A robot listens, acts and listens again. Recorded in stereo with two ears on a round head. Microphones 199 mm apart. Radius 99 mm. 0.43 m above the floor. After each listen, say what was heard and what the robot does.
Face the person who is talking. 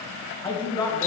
The man speaking: about 20° left or 160° left. Turn 20° left.
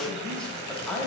Facing the man speaking, 2 to 4 m away.